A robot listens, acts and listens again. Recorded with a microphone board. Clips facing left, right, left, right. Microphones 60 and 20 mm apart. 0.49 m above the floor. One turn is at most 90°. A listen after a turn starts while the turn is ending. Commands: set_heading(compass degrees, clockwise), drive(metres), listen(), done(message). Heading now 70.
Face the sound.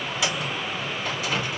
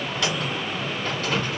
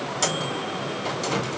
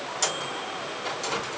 set_heading(40)
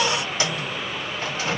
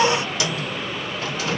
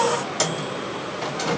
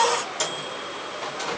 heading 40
set_heading(310)
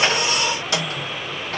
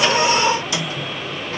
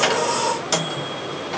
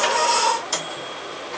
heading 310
set_heading(240)
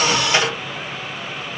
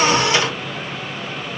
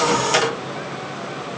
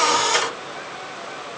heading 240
set_heading(195)
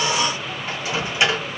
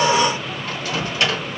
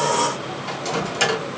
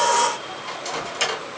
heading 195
set_heading(175)
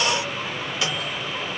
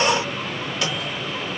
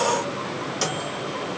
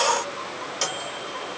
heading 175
done("Facing the microwave, 2 to 4 m away.")